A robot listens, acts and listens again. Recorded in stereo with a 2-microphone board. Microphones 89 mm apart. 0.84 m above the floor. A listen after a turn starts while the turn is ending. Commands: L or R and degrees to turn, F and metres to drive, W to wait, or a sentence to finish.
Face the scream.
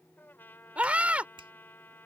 R15
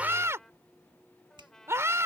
R150
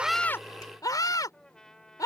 L45
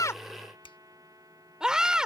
R10
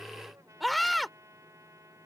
Facing the scream.